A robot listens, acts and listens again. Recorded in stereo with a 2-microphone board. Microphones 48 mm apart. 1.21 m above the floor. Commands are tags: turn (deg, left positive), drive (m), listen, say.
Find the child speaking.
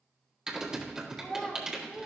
<turn deg="25"/>
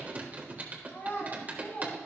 <turn deg="130"/>
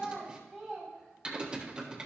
<say>Found it: a child speaking, straight ahead.</say>